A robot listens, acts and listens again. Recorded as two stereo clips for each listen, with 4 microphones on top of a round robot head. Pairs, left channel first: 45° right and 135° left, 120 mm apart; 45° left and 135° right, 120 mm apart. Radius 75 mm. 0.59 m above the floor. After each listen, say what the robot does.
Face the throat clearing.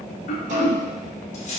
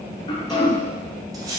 Turn 10° right.
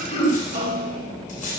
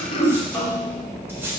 Facing the throat clearing.